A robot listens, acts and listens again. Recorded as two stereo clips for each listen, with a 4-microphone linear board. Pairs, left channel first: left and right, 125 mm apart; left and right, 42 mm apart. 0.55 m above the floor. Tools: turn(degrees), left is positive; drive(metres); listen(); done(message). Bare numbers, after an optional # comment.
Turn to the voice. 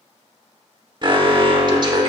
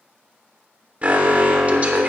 listen()
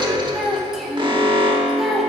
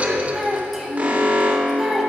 turn(30)
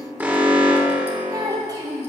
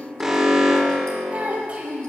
# So it is at 30° right.
turn(-30)
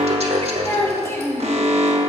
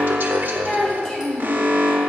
# The child speaking is now 20° left.
turn(20)
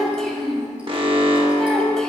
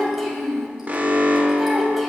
done("Found it: a child speaking, straight ahead, 2 to 4 m away.")